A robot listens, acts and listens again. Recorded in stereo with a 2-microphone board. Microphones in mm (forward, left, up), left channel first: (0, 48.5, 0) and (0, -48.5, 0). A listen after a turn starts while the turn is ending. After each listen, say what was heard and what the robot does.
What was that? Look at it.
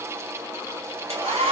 The hair dryer: about 75° right or 105° right. Turn 75° right.
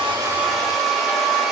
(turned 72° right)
Found it: a hair dryer, straight ahead, 1 to 2 m away.